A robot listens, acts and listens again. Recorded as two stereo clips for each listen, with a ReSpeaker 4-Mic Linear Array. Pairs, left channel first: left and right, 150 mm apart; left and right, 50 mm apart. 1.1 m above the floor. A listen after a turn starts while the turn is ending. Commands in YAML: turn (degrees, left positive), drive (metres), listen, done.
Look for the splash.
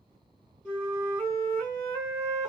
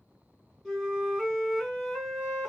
listen: true
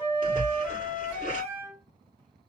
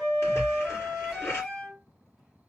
turn: 60
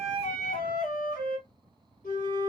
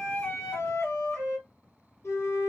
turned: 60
listen: true
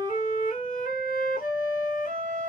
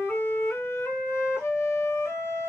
done: "I heard a splash, but can't make it out now. It was about straight ahead or 60° left."